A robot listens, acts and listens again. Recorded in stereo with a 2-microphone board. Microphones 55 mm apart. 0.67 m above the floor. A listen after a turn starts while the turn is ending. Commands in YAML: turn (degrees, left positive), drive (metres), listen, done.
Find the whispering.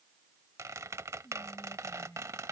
turn: 65
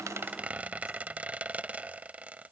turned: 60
listen: true
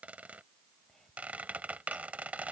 done: "Found it: whispering, straight ahead."